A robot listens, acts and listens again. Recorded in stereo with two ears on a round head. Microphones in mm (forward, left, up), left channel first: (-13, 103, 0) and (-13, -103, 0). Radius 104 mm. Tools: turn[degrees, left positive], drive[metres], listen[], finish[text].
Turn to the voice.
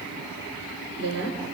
Thought: The woman speaking: about 55° right or 125° right.
Action: turn[-55]
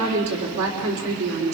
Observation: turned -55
Thought: So it is at 65° right.
Action: turn[-65]
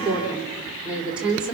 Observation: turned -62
Action: finish[Found it: a woman speaking, straight ahead, 2 to 4 m away.]